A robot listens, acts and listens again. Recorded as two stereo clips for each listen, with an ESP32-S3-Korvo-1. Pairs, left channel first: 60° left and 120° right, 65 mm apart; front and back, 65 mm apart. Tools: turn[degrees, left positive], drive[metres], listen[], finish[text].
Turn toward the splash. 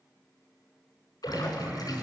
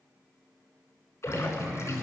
Thought: The splash: 50° left.
Action: turn[50]
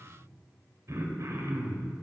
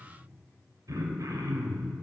Action: finish[I heard a splash from this way, but can't make it out now.]